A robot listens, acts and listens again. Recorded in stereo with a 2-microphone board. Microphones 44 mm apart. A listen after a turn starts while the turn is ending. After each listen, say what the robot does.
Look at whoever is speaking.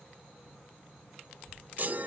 Turn 70° left.
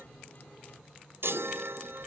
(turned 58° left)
Keep listening.
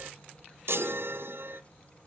Turn 35° left.
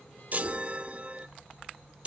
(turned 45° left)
Turn 10° right.
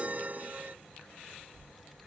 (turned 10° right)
Facing the child speaking.